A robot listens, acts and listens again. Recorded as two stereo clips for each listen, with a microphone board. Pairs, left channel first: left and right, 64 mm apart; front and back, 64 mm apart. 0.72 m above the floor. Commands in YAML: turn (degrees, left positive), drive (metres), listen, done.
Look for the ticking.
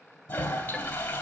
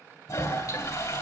done: "Facing the ticking, 1 to 2 m away."